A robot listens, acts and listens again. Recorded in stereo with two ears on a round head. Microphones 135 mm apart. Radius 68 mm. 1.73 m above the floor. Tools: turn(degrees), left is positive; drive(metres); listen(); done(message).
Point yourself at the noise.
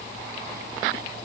listen()
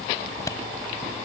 turn(degrees=20)
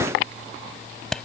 done("Facing the clap.")